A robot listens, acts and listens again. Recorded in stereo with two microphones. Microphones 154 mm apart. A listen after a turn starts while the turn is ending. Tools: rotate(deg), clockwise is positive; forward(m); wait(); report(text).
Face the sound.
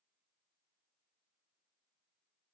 wait()
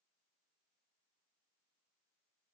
wait()
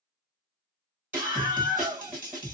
rotate(30)
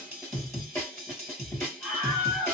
rotate(-20)
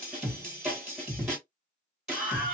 report("Facing the scream, 2 to 4 m away.")